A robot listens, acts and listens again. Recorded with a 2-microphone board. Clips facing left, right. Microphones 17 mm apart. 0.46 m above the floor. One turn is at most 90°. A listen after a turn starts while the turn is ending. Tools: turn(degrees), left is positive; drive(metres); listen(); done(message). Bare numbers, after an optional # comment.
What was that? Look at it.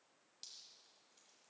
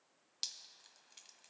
# The dripping: about 60° right or 120° right.
turn(-60)
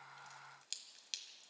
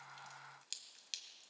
done("Facing the dripping.")